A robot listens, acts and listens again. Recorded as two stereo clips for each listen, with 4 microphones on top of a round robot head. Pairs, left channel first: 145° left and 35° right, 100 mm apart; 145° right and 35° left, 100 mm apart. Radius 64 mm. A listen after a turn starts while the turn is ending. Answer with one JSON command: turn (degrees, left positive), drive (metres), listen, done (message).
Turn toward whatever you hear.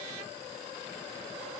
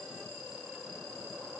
{"listen": true}
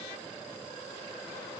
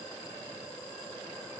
{"listen": true}
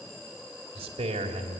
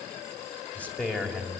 {"turn": -65}
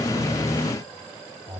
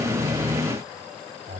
{"done": "Facing the man speaking."}